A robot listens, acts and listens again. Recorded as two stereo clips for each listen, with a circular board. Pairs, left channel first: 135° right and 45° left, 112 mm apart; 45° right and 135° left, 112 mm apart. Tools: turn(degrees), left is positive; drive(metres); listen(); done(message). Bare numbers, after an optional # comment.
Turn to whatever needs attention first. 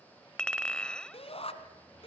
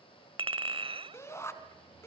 # The shout: 110° right.
turn(-110)
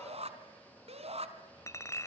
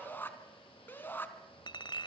# The shout is now 25° left.
turn(25)
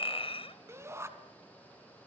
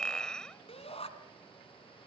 # The shout is now 20° right.
turn(-20)
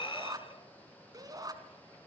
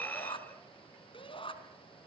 # The shout is now 10° right.
turn(-10)
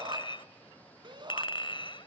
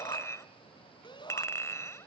done("Found it: a shout, straight ahead.")